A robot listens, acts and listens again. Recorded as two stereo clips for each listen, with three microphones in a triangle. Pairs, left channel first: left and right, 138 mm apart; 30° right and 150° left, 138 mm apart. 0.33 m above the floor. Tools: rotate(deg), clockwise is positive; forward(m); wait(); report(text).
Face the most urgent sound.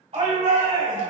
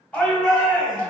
rotate(110)
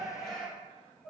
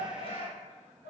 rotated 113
report("Facing the shout.")